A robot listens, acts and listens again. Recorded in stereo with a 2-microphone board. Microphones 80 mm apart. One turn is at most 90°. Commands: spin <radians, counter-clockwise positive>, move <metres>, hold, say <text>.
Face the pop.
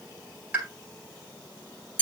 spin -0.35
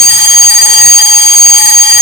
hold
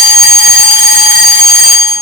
say I heard a pop, but can't make it out now. It was about straight ahead or 140° right.